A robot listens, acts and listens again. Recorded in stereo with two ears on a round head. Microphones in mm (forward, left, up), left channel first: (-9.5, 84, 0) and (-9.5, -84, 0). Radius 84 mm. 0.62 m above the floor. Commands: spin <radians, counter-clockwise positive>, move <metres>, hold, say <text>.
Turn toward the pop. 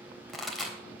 spin 0.52
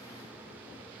hold
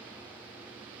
say I heard a pop, but can't make it out now. It was about 30° right or 150° left.